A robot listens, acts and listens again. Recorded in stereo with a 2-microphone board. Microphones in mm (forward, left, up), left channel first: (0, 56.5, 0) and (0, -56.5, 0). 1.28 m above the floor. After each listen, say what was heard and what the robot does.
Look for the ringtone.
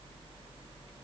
Keep listening.
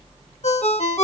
Turn 90° left.
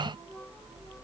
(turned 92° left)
Keep listening.
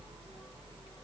Keep listening.
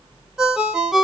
Facing the ringtone.